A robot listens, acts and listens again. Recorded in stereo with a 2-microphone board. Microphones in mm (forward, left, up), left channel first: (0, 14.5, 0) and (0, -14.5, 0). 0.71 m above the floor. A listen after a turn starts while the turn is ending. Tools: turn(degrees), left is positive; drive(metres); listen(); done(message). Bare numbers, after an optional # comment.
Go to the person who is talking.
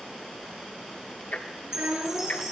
# The child speaking: about 75° right or 105° right.
turn(-75)
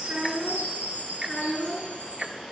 drive(1.0)
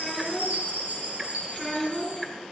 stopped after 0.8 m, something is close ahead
done("Blocked. The child speaking is further on, straight ahead.")